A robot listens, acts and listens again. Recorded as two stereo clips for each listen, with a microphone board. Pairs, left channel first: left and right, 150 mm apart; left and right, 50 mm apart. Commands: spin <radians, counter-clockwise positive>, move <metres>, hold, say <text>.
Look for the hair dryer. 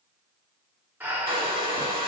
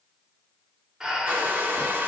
spin -0.61
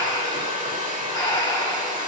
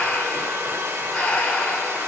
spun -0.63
spin -1.75
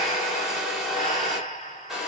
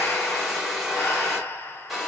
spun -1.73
say Found it: a hair dryer, straight ahead, 1 to 2 m away.